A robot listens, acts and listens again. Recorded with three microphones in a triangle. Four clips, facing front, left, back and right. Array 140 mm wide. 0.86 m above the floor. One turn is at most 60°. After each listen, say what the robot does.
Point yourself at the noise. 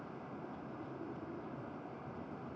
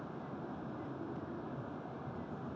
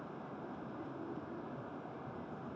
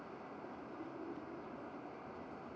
Keep listening.
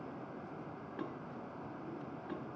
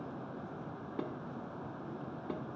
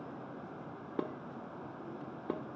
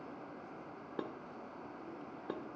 Turn 60° right.
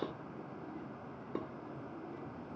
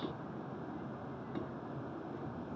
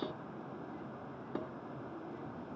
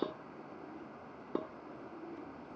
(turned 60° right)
Turn 60° right.
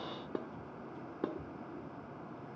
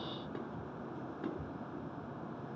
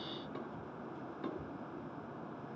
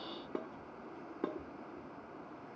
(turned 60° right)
Turn 35° right.
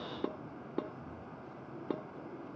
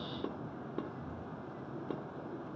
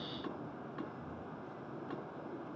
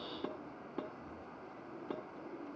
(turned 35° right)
Found it: dishes clattering, straight ahead.